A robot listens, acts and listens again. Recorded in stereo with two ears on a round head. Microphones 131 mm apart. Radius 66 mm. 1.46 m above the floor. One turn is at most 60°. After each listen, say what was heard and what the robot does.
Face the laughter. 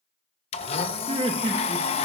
The laughter: about 40° right or 140° right. Turn 40° right.
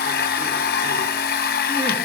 Keep listening.
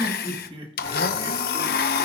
The laughter: about 35° right or 145° right. Turn 35° right.
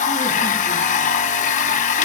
Keep listening.
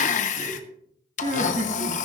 So it is at 125° right. Turn 60° right.
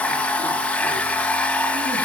Nothing new. It was at 65° right. Turn 60° right.
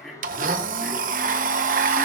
Found it: laughter, straight ahead.